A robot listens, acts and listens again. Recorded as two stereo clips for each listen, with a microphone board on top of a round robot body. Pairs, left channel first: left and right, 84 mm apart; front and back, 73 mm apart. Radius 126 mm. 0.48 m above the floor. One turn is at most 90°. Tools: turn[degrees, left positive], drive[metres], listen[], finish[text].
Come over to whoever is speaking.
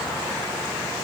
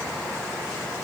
Action: listen[]
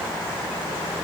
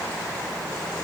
Action: listen[]
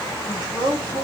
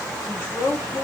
Thought: The woman speaking: 55° right.
Action: turn[-55]
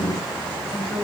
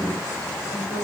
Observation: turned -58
Action: drive[1.0]
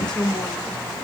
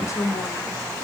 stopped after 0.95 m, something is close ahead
Thought: The woman speaking is now 10° left.
Action: turn[10]
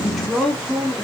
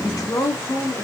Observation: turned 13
Action: finish[Arrived at the woman speaking, straight ahead.]